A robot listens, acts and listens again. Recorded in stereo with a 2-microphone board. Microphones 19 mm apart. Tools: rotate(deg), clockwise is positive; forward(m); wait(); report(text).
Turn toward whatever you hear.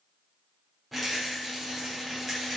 rotate(-30)
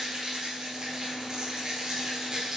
rotate(30)
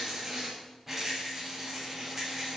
report("Found it: a rattle, straight ahead.")